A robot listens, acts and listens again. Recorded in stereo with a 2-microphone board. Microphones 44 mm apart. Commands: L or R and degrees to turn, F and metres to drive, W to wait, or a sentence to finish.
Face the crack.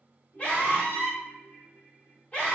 W
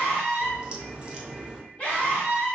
R20
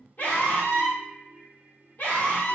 W
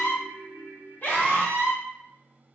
I heard a crack, but can't make it out now. It was about straight ahead or 140° right.